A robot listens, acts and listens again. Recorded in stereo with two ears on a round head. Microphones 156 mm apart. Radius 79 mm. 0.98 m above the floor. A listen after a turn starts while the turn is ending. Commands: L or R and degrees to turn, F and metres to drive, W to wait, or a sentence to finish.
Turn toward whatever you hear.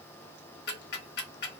L60
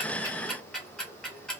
Found it: ticking, straight ahead.